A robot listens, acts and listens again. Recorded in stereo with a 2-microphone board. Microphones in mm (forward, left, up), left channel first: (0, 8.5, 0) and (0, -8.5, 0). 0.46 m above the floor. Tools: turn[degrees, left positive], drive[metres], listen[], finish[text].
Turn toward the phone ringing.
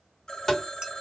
Thought: The phone ringing: about 45° left or 135° left.
Action: turn[45]
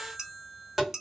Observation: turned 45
Thought: So it is at 10° left.
Action: turn[10]
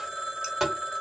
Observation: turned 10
Action: finish[Found it: a phone ringing, straight ahead.]